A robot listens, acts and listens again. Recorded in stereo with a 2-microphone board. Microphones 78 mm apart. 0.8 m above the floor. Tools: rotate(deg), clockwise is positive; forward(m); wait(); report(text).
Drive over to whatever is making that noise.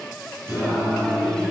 rotate(30)
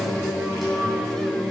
forward(1.0)
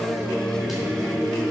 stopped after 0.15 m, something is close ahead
report("Something is in my way. I am facing the singing but have not reached it.")